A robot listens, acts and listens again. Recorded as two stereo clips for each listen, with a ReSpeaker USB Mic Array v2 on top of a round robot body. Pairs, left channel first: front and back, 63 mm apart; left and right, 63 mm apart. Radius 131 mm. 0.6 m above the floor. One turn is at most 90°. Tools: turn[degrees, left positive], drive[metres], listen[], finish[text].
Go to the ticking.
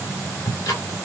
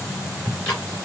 Thought: The ticking: 20° left.
Action: turn[20]
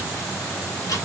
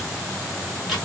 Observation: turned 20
Action: drive[1.0]
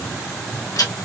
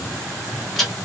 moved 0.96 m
Action: drive[1.0]
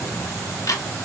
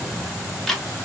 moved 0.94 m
Action: drive[1.0]
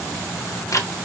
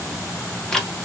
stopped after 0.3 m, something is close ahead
Thought: The ticking is now 10° left.
Action: turn[10]
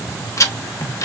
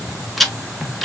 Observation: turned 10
Action: finish[I am next to the ticking.]